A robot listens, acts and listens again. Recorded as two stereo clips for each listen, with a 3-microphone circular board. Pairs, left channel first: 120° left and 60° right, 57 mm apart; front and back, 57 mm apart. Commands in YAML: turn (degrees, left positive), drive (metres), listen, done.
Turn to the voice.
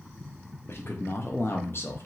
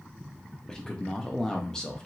turn: 80
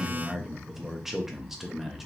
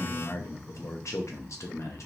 turn: 25
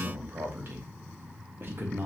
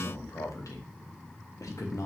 turn: -10
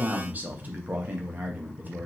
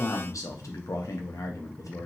done: "Facing the man speaking, under 1 m away."